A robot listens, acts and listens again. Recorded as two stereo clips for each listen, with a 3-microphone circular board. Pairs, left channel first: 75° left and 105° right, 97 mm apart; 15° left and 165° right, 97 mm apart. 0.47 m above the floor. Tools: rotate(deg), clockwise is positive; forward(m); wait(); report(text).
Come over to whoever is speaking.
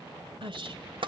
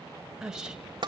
rotate(85)
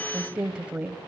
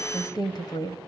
rotate(25)
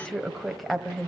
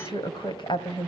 rotate(15)
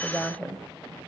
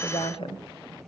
forward(1.0)
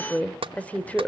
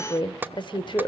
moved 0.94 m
forward(1.0)
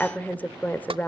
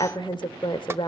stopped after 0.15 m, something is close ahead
report("I am next to the woman speaking.")